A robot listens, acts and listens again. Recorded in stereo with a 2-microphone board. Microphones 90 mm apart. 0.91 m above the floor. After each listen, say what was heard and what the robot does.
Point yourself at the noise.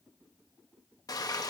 The frying: about 40° left or 140° left. Turn 40° left.
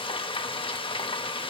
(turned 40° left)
So it is at 95° left. Turn 95° left.
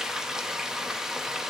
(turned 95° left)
Found it: frying, straight ahead, under 1 m away.